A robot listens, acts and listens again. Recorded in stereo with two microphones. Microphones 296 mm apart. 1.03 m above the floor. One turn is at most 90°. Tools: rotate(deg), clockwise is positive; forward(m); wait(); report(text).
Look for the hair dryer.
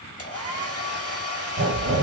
rotate(-50)
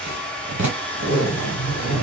report("Found it: a hair dryer, straight ahead.")